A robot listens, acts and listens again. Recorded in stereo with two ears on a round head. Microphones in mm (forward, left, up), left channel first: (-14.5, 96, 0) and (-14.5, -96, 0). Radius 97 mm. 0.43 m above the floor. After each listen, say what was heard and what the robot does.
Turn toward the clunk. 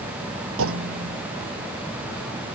The clunk: about 75° right or 105° right. Turn 75° right.
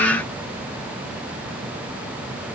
Keep listening.
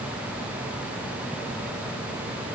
I heard a clunk, but can't make it out now. It was about straight ahead or 30° right.